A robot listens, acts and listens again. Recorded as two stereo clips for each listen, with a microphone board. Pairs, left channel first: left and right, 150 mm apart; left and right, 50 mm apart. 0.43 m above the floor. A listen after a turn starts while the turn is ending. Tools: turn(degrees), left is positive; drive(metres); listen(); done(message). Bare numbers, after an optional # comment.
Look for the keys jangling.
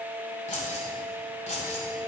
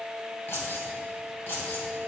# The keys jangling: about 55° left or 125° left.
turn(55)
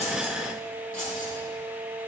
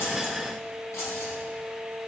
# So it is at 70° left.
turn(70)
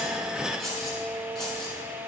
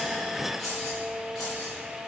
done("Facing the keys jangling, over 4 m away.")